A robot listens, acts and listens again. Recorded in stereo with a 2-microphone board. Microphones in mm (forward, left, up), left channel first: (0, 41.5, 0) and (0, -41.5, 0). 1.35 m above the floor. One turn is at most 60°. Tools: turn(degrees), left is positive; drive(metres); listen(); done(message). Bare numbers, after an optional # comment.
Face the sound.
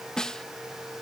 turn(30)
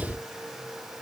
listen()
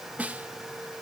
# So it is at 20° right.
turn(-20)
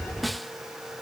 done("Facing the snare drum.")